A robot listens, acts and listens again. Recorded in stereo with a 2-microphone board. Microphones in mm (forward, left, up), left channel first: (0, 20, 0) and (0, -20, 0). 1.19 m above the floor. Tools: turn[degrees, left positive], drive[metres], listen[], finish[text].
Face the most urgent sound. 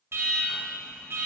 Action: turn[-90]
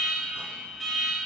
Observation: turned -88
Action: finish[Found it: an alarm, straight ahead, 1 to 2 m away.]